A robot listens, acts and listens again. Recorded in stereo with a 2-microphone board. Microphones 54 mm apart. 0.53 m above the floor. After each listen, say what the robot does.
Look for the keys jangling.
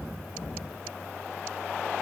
Keep listening.
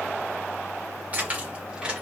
Turn 15° right.
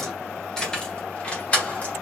Turn 25° left.
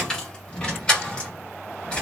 Turn 25° left.
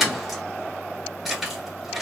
Facing the keys jangling.